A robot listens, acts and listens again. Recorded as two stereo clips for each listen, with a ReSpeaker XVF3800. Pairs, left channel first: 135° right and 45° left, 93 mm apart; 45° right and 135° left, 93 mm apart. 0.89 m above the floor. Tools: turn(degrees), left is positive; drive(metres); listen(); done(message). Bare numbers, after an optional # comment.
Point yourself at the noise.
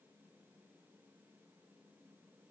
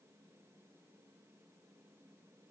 listen()
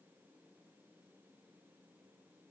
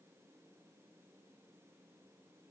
listen()
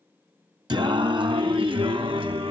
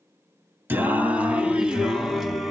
# The singing: 45° left.
turn(45)
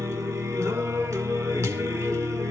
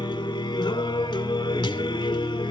# The singing is now 10° right.
turn(-10)
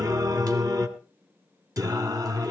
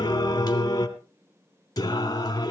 done("Found it: singing, straight ahead, 2 to 4 m away.")